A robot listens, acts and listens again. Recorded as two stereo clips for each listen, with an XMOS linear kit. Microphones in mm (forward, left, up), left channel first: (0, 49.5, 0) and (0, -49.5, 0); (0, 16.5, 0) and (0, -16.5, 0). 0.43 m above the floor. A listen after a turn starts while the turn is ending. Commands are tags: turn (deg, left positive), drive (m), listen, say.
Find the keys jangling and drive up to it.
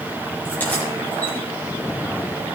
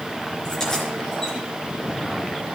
<listen/>
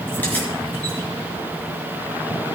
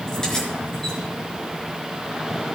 <listen/>
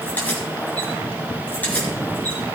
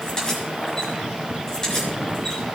<turn deg="20"/>
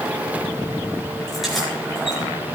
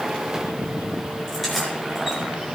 <drive m="1.0"/>
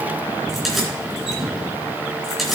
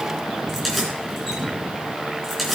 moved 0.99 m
<drive m="1.0"/>
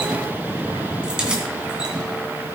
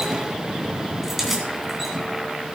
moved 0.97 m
<turn deg="-10"/>
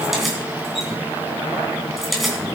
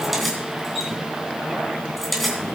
<drive m="1.0"/>
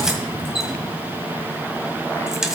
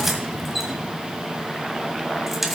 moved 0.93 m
<drive m="1.0"/>
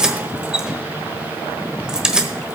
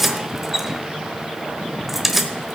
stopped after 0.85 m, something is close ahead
<turn deg="-10"/>
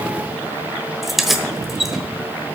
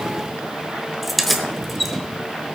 <say>Arrived at the keys jangling, straight ahead.</say>